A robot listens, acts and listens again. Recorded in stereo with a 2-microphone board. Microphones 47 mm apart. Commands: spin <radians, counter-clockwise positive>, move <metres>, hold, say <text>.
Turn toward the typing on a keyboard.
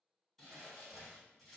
hold
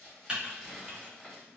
spin -0.35
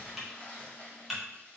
say Facing the typing on a keyboard.